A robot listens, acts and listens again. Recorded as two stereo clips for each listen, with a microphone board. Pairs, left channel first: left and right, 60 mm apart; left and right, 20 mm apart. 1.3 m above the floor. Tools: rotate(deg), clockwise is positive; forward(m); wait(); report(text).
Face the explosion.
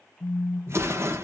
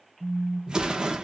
rotate(45)
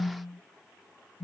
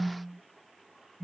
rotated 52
wait()
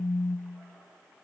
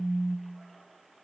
report("I heard an explosion, but can't make it out now. It was about 5° left or 80° right.")